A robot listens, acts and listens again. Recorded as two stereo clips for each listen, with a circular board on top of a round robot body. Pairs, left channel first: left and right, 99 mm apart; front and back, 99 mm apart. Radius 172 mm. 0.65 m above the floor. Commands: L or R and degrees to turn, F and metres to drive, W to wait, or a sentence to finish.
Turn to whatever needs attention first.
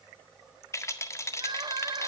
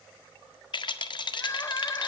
R60
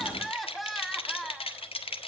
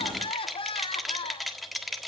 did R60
Found it: crying, straight ahead, 1 to 2 m away.